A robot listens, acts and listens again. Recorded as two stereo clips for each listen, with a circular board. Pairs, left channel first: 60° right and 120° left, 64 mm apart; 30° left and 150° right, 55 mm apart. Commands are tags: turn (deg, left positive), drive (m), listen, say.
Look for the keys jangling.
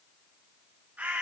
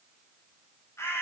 <listen/>
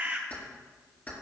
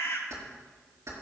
<turn deg="-125"/>
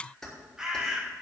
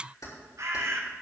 <turn deg="25"/>
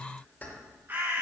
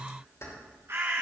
<say>Facing the keys jangling.</say>